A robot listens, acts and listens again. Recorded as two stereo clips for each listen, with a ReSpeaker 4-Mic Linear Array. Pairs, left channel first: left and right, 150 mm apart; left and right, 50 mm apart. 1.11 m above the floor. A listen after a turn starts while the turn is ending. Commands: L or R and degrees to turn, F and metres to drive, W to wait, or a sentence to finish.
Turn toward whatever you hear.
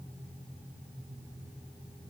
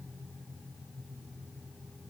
W
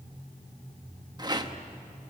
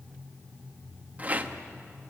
R30
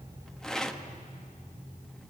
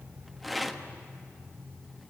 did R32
Found it: a rattle, straight ahead.